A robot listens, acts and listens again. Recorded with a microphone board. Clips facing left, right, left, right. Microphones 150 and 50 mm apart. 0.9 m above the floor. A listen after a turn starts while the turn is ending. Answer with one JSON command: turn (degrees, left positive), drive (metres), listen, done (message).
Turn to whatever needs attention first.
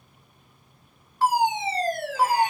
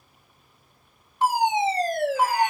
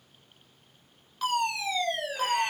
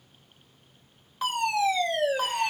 {"turn": -20}
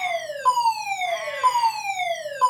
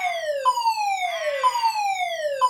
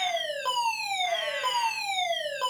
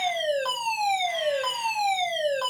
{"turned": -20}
{"done": "Facing the fire alarm."}